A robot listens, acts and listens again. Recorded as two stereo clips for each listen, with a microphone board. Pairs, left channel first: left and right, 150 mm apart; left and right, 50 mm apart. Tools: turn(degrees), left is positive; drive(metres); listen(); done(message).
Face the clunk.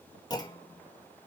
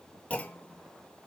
turn(degrees=25)
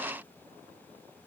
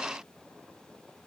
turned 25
listen()
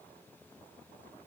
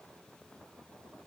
done("I heard a clunk, but can't make it out now. It was about straight ahead or 130° left.")